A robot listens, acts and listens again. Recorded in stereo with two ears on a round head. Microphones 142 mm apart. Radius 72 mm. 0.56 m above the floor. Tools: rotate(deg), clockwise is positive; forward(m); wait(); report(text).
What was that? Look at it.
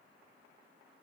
wait()
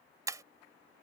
rotate(20)
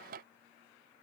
wait()
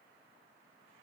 report("I heard breaking glass, but can't make it out now. It was about straight ahead or 140° right.")